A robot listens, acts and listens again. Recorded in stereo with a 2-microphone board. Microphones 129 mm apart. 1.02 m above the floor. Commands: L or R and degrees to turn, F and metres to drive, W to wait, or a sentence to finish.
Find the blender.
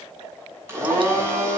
R20
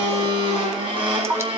R140
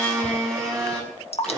Facing the blender.